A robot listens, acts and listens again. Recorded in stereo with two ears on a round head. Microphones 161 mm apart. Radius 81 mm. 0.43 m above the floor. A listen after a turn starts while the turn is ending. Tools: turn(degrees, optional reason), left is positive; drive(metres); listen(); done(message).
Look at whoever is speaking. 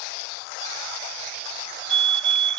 listen()
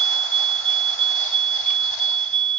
listen()
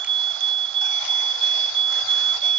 done("I can't make out anyone speaking, only a fire alarm.")